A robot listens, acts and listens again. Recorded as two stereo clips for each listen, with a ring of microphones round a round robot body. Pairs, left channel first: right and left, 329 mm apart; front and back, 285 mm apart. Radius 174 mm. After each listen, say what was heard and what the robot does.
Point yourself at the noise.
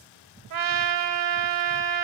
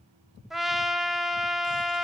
The trumpet: 90° left. Turn 90° left.
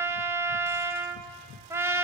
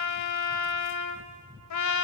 The trumpet is now 10° left. Turn 10° left.
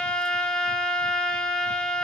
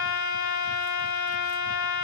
Facing the trumpet, 1 to 2 m away.